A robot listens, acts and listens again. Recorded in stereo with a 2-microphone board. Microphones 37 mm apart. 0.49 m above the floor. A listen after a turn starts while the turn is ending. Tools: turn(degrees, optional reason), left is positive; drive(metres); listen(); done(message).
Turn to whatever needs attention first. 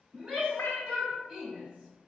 turn(degrees=-25, reason="The shout: about 25° right or 155° right.")
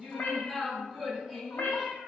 done("Facing the shout.")